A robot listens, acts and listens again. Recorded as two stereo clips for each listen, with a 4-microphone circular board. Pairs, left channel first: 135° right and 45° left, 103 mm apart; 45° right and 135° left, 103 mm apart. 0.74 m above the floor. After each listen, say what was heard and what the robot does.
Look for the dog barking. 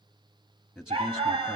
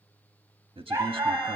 The dog barking: 70° left. Turn 70° left.
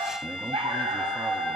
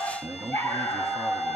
The dog barking is now 20° left. Turn 20° left.
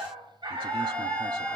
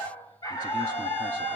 Found it: a dog barking, straight ahead.